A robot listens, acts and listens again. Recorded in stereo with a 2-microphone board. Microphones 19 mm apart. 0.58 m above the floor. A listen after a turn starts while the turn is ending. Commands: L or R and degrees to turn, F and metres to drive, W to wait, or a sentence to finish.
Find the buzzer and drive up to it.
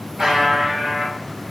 R30
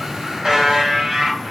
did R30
R120
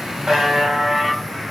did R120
R40
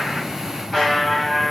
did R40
F1.0
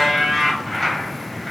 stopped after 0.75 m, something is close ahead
L10
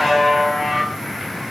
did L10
Arrived at the buzzer, straight ahead.